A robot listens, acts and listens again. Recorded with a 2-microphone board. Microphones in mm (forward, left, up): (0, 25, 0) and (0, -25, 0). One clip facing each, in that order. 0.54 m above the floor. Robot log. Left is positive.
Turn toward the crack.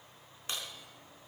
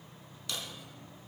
note: The crack: about 35° left or 145° left.
cmd yaw +35
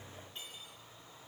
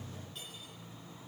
cmd idle
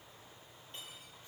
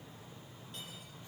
end: I heard a crack, but can't make it out now. It was about straight ahead or 110° left.